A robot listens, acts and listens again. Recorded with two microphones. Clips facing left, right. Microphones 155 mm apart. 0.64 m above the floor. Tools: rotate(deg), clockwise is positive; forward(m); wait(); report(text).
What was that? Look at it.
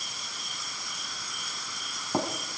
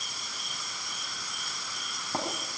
rotate(-30)
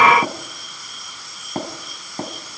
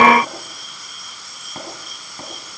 rotate(-140)
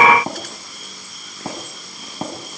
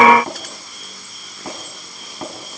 rotate(-25)
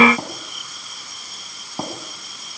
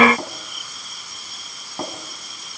rotate(-10)
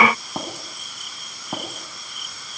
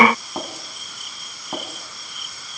report("Facing the tapping.")